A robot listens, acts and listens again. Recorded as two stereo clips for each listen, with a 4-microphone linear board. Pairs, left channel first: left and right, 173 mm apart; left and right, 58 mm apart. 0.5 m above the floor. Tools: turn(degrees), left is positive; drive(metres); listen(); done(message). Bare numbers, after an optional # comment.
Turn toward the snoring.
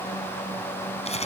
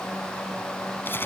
listen()
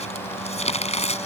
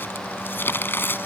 listen()
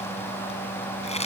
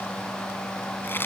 done("I can't make out snoring, only crumpling.")